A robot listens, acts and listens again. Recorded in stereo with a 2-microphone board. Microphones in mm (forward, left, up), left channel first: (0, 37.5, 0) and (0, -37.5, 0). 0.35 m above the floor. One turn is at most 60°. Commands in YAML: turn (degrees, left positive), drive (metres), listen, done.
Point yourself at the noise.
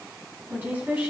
turn: -25
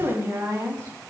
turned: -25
turn: -60
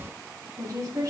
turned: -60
turn: -55
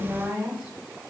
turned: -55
turn: -10
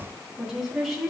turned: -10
done: "Facing the woman speaking."